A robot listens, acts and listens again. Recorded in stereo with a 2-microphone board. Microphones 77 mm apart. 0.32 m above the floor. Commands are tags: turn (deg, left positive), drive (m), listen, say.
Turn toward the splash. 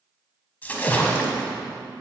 <turn deg="20"/>
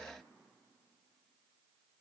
<listen/>
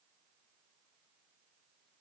<say>I heard a splash, but can't make it out now. It was about straight ahead or 140° left.</say>